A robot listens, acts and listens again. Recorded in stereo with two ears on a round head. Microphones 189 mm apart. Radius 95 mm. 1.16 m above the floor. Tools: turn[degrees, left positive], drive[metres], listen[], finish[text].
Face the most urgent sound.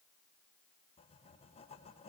Action: listen[]
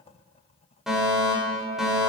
Action: turn[30]
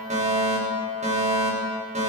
Thought: So it is at 35° right.
Action: turn[-35]
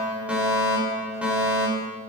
Action: finish[Facing the fire alarm, over 4 m away.]